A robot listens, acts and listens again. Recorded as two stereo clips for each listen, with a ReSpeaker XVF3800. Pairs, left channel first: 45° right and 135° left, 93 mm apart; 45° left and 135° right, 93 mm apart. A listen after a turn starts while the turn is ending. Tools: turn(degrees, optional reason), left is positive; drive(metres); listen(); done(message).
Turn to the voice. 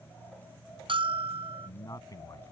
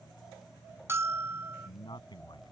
turn(degrees=10, reason="The man speaking: 10° left.")
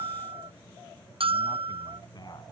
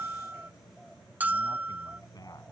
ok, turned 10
listen()
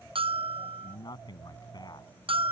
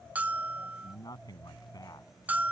done("Found it: a man speaking, straight ahead.")